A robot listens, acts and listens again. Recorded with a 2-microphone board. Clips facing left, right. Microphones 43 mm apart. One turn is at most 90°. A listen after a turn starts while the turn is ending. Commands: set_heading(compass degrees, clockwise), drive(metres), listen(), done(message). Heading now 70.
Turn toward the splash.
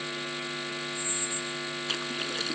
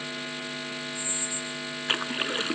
set_heading(110)
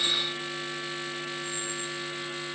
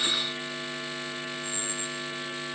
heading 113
listen()
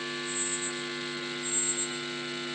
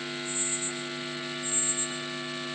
done("I heard a splash, but can't make it out now. It was about 5° left or 95° right.")